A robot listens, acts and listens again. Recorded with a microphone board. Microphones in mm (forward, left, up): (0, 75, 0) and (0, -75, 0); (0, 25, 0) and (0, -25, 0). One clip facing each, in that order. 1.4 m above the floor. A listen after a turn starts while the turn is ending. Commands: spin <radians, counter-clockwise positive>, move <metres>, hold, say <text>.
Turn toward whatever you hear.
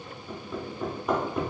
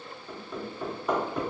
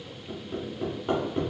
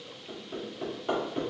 spin 0.52
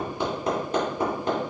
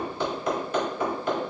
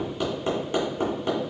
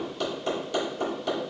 spin 2.53
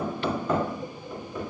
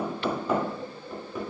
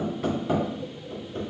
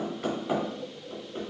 say Found it: hammering, straight ahead.